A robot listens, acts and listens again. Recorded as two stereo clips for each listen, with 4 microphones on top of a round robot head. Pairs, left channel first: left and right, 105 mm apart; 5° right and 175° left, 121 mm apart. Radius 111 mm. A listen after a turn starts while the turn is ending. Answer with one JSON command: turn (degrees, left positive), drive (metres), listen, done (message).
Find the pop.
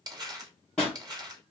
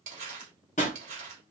{"done": "Found it: a pop, straight ahead, 1 to 2 m away."}